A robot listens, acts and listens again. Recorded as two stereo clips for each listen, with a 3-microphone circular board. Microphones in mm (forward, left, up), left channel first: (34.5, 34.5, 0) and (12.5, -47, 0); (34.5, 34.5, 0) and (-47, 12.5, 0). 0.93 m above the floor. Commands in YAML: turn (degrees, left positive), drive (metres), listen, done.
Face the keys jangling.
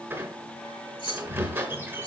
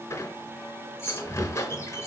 turn: 75
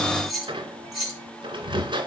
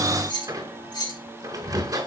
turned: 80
turn: -20
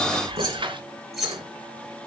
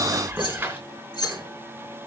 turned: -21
turn: -15
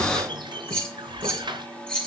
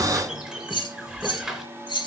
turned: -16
done: "Facing the keys jangling."